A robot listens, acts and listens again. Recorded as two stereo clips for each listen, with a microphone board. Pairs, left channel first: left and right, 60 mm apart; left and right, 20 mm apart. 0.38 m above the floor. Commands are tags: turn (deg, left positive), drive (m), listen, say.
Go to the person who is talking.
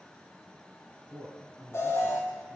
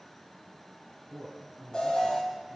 <turn deg="15"/>
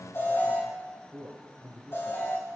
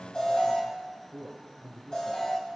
<drive m="1.0"/>
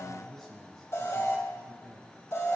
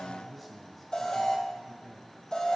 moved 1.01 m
<drive m="1.0"/>
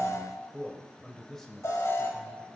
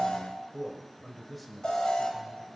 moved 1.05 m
<turn deg="10"/>
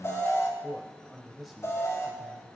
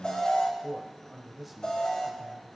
<drive m="1.0"/>
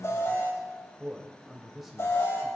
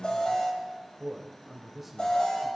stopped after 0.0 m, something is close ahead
<say>Arrived at the man speaking, straight ahead.</say>